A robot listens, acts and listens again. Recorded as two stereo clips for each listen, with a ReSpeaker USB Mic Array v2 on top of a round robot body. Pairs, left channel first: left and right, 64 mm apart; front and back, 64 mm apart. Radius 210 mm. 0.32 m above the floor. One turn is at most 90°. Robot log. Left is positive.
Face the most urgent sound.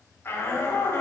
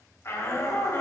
note: The shout: 45° left.
cmd yaw +45
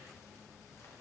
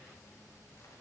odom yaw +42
cmd idle
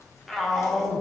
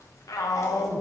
end: Found it: a shout, straight ahead, 1 to 2 m away.